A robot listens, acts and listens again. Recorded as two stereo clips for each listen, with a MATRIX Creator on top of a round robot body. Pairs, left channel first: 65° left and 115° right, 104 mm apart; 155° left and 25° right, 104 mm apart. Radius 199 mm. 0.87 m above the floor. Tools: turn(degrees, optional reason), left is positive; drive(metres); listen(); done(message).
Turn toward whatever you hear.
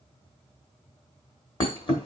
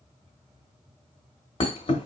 turn(degrees=115, reason="The thud: 115° left.")
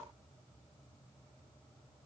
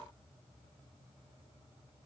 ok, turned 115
done("I heard a thud from this way, but can't make it out now.")